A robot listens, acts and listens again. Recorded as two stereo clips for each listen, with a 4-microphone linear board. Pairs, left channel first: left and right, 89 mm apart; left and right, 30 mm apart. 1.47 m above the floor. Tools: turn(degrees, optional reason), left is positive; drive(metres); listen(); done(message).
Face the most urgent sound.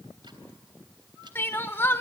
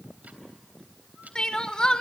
turn(degrees=25, reason="The crying: about 25° left or 155° left.")
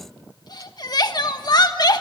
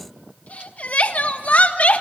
turn(degrees=130, reason="So it is at 130° left.")
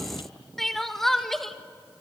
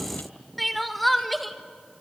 done("Found it: crying, straight ahead, 1 to 2 m away.")